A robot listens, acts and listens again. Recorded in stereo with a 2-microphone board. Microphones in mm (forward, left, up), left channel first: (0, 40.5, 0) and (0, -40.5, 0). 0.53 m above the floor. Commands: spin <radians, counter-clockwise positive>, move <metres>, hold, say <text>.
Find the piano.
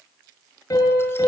spin 0.87
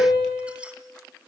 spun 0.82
spin 1.48
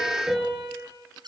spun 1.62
say Found it: a piano, straight ahead.